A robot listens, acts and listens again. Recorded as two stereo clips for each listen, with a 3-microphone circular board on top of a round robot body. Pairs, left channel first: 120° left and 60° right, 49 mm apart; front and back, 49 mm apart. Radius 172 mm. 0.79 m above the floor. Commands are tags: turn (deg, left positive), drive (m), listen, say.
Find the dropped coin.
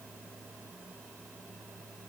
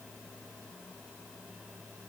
<listen/>
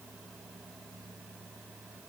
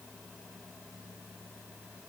<listen/>
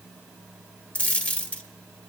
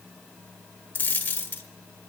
<turn deg="55"/>
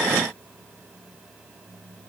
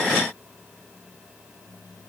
<say>I heard a dropped coin from this way, but can't make it out now.</say>